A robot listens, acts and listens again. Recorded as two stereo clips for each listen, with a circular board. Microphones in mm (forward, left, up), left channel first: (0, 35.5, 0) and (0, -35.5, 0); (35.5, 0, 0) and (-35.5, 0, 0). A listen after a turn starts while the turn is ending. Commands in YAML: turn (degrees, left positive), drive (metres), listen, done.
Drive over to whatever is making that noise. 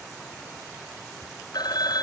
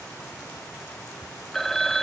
turn: 85
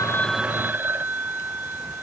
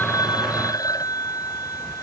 turn: -30
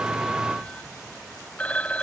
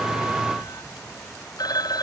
turn: 20
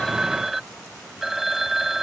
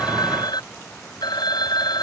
drive: 1.0
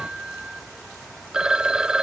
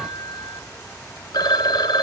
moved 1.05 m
turn: -10
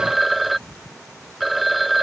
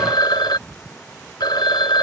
drive: 1.0
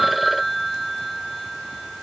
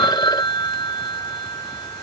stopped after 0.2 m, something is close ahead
done: "I am next to the phone ringing."